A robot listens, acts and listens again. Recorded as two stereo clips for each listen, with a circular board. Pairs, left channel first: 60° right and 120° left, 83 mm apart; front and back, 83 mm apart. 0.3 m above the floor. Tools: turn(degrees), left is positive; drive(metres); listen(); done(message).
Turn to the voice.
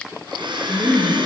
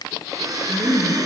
turn(degrees=-155)
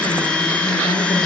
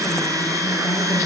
turn(degrees=-65)
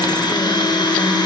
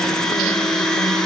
listen()
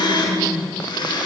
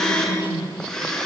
turn(degrees=-15)
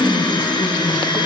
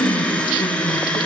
done("Found it: a woman speaking, straight ahead, over 4 m away.")